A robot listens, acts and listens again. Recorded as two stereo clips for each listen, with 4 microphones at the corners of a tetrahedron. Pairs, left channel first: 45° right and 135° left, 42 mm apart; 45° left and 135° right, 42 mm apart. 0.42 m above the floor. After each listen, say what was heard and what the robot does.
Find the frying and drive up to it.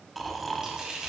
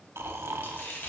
The frying: 65° left. Turn 65° left.
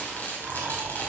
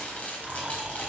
Drive 1.0 m forward.
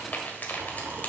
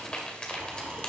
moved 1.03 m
The frying is now 15° right. Turn 15° right.
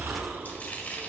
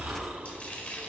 Drive 1.0 m forward.
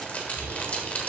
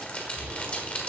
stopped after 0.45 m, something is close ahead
Arrived at the frying, straight ahead.